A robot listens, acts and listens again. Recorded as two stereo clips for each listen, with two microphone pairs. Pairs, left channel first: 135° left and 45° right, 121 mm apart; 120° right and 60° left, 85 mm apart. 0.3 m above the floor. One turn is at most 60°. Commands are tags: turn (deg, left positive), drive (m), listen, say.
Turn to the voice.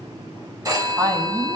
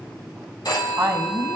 <say>Found it: a woman speaking, straight ahead, 2 to 4 m away.</say>